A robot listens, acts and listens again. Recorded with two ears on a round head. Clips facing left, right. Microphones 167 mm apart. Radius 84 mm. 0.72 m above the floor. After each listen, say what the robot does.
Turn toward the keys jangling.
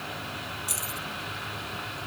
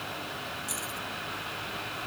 Turn 30° left.
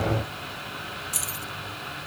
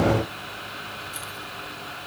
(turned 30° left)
Turn 115° left.
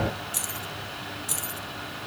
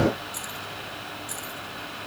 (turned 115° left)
Turn 35° left.
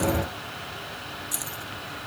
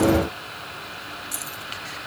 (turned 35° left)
Found it: keys jangling, straight ahead.